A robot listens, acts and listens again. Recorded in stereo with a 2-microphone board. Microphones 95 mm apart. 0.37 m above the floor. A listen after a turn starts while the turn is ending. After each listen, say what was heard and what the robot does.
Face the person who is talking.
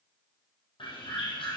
Keep listening.
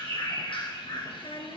Turn 90° left.
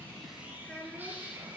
So it is at 10° left. Turn 10° left.
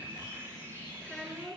Facing the child speaking, 2 to 4 m away.